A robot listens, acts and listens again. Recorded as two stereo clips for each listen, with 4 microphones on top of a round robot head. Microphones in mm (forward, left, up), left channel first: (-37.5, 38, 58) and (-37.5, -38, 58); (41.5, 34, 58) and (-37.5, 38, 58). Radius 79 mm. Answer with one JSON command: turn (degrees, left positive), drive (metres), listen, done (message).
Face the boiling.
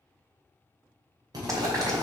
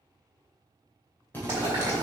{"turn": -125}
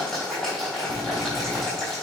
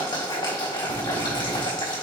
{"done": "Found it: boiling, straight ahead."}